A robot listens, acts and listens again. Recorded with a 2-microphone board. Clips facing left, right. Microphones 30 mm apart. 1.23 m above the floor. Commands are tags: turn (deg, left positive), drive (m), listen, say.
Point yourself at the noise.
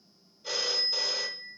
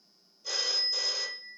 <turn deg="40"/>
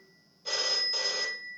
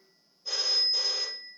<turn deg="95"/>
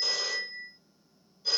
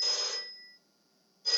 <turn deg="10"/>
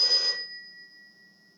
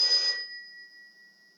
<say>Facing the phone ringing.</say>